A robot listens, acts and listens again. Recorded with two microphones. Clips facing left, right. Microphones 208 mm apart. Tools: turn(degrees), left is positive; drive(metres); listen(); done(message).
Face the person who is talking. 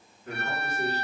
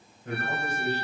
turn(degrees=-55)
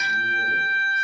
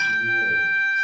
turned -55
listen()
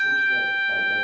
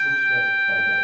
listen()
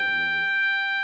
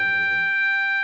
done("I heard a man speaking, but can't make it out now. It was about straight ahead or 70° right.")